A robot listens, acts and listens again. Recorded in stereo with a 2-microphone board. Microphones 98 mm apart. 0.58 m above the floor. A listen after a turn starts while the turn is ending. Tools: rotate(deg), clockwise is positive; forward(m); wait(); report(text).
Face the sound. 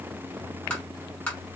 rotate(-30)
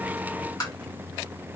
rotate(-135)
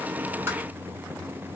wait()
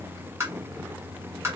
rotate(30)
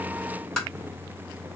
report("Facing the tapping, 1 to 2 m away.")